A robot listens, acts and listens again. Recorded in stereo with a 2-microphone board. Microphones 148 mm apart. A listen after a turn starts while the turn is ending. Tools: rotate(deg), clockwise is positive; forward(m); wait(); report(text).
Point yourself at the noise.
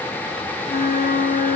rotate(-70)
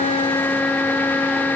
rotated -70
report("Found it: a flute, straight ahead, 1 to 2 m away.")